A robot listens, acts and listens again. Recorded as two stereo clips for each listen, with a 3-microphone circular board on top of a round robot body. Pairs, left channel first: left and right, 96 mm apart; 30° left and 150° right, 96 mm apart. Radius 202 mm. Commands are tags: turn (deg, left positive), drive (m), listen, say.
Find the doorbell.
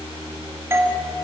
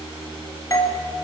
<turn deg="-25"/>
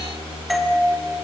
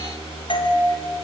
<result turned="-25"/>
<say>Facing the doorbell, 2 to 4 m away.</say>